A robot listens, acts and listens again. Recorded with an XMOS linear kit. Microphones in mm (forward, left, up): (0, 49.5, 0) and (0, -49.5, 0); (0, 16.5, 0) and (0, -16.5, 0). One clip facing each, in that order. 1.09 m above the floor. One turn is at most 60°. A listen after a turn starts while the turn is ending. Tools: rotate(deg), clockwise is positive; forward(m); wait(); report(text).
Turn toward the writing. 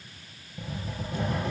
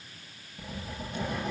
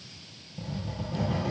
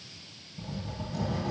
rotate(-60)
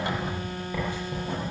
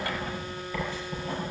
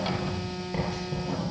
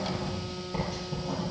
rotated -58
rotate(-20)
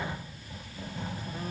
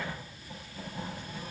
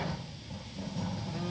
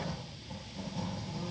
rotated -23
report("Found it: writing, straight ahead.")